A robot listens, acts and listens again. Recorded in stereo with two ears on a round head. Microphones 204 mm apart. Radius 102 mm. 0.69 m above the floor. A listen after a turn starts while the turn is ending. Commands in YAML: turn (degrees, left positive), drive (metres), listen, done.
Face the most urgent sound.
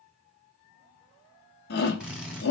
turn: 45
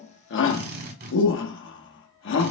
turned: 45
turn: 80
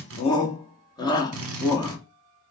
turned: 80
turn: 20
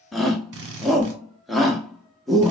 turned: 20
done: "Facing the shout."